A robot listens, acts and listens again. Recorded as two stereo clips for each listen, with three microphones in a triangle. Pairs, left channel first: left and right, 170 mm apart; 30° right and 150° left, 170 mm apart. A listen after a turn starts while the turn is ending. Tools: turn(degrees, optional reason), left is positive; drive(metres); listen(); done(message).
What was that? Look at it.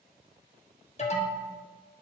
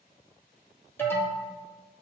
turn(degrees=45, reason="The alarm: 45° left.")
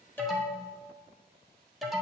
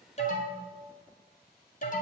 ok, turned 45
done("Facing the alarm.")